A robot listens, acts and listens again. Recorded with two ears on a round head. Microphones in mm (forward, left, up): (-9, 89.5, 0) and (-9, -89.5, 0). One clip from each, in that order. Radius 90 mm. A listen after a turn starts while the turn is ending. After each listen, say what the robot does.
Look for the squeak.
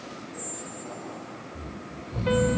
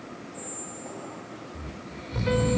Turn 90° left.
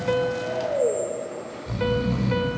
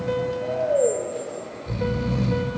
Keep listening.
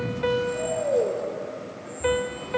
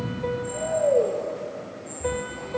Keep listening.
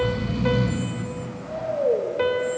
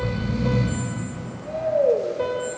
Facing where the squeak came from. I can't hear it now.